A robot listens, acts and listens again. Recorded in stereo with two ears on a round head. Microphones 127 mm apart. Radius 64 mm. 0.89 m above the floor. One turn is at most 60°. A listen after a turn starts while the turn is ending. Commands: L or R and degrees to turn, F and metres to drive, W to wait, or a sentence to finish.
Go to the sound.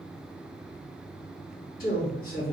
L60
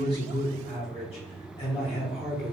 L45
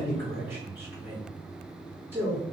R15
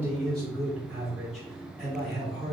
F1.0
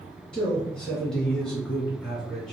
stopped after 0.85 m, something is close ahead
I am next to the man speaking.